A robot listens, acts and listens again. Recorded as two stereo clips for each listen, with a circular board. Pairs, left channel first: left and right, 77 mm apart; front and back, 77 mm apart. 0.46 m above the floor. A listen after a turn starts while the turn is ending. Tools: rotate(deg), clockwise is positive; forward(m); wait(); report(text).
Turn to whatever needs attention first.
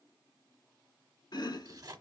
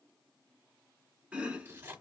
wait()
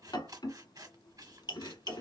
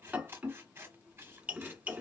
wait()
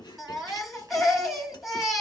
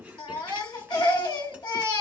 report("Facing the baby crying, 1 to 2 m away.")